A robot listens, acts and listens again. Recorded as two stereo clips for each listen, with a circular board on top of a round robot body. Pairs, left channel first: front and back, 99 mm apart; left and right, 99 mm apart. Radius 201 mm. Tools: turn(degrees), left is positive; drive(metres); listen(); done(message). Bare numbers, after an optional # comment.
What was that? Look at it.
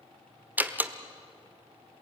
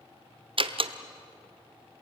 # The door slam: 110° right.
turn(-110)
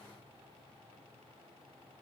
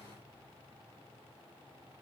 done("I heard a door slam from this way, but can't make it out now.")